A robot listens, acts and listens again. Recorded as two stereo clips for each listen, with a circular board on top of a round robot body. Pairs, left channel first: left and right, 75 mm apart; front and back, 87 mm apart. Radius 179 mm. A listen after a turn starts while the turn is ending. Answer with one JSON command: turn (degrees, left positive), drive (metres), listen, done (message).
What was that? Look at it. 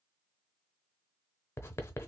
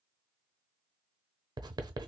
{"turn": 145}
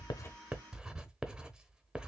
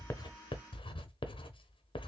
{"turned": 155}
{"turn": -10}
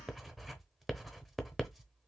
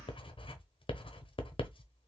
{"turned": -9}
{"done": "Facing the writing."}